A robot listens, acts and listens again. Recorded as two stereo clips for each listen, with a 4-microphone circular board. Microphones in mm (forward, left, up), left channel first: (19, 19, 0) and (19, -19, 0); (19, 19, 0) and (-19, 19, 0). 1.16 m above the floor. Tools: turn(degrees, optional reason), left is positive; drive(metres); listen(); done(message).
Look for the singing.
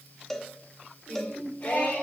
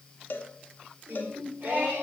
turn(degrees=130, reason="The singing: 130° left.")
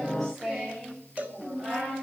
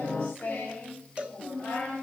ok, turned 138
turn(degrees=-20, reason="The singing is now 20° right.")
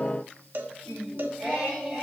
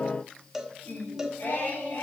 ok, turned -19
done("Facing the singing.")